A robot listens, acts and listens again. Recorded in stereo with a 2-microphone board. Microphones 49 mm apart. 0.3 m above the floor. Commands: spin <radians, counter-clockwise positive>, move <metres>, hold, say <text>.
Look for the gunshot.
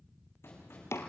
spin 1.05
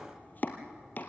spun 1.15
hold
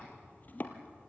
say I heard a gunshot, but can't make it out now. It was about 5° right or 55° left.